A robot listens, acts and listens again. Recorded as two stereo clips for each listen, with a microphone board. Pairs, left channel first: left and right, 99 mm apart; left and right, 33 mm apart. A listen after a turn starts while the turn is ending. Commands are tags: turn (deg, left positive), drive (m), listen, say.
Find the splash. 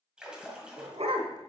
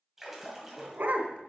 <turn deg="-30"/>
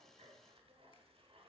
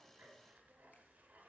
<listen/>
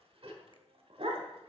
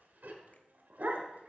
<say>I heard a splash, but can't make it out now. It was about 20° left or 140° right.</say>